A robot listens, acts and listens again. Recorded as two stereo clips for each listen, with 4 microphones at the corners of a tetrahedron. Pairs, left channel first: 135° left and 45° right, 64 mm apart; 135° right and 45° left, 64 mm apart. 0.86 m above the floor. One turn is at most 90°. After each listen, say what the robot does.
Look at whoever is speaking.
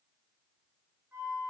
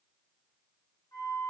Keep listening.
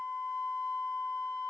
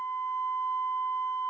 Keep listening.
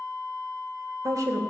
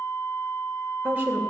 Turn 20° right.
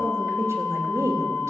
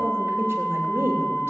Turn 10° right.
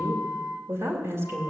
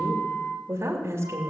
Facing the woman speaking, 2 to 4 m away.